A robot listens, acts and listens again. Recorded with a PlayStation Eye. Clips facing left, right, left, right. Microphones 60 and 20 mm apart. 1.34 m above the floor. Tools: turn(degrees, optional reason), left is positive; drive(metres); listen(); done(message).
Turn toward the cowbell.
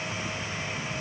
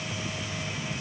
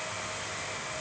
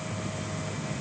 listen()
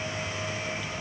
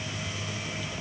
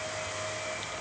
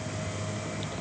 listen()
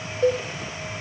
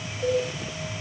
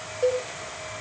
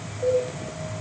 turn(degrees=70, reason="The cowbell: about 70° left or 110° left.")
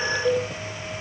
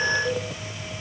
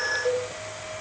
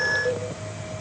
turn(degrees=40, reason="So it is at 40° left.")
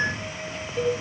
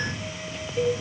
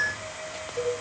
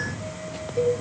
done("Found it: a cowbell, straight ahead.")